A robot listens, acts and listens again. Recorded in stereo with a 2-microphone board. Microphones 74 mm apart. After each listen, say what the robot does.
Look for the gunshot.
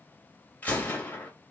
Turn 25° left.
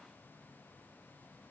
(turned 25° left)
Keep listening.
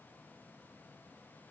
I heard a gunshot, but can't make it out now. It was about straight ahead or 130° left.